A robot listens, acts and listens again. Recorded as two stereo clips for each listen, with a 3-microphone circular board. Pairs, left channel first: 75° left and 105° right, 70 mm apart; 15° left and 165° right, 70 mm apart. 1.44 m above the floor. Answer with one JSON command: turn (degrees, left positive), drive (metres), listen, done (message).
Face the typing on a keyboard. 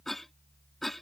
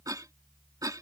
{"listen": true}
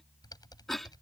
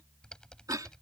{"turn": 95}
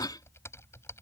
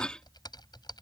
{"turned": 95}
{"turn": 25}
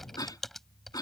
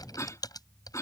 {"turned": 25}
{"turn": -10}
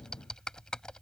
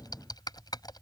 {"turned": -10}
{"done": "Found it: typing on a keyboard, straight ahead."}